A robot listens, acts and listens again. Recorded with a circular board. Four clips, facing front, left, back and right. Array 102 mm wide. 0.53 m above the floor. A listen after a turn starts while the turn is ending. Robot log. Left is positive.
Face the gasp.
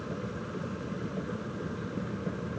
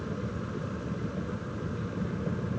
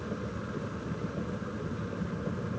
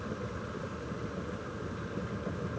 cmd idle
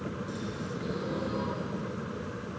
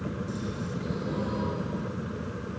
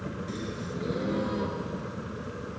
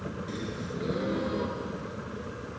note: The gasp: 125° right.
cmd yaw -125
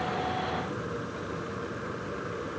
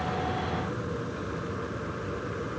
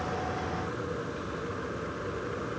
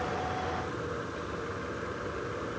end: Facing where the gasp came from. I can't hear it now.